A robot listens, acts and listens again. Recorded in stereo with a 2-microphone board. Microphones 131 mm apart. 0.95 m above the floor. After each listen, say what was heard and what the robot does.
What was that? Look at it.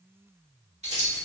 The keys jangling: about 65° right or 115° right. Turn 65° right.
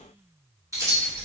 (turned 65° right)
So it is at 15° right. Turn 15° right.
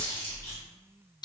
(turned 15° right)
The keys jangling is now 35° left. Turn 35° left.
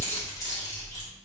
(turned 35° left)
The keys jangling is now 30° left. Turn 30° left.
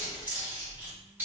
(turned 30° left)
The keys jangling is now 15° right. Turn 15° right.
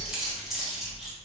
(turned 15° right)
Facing the keys jangling, 1 to 2 m away.